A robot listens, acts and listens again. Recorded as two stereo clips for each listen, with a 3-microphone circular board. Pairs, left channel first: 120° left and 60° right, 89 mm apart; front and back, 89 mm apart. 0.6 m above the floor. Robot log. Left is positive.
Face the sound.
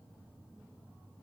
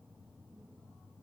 cmd idle
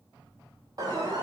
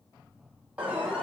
note: The alarm: 105° right.
cmd yaw -105
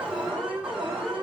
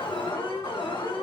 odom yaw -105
note: The alarm is now 20° left.
cmd yaw +20
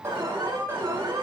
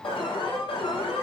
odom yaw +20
end: Facing the alarm, over 4 m away.